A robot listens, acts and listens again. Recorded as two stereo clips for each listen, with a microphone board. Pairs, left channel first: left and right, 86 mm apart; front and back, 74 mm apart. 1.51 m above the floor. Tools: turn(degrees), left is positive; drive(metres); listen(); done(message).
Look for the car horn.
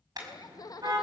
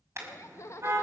turn(degrees=-130)
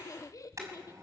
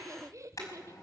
turn(degrees=-40)
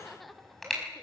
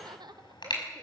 done("Facing the car horn.")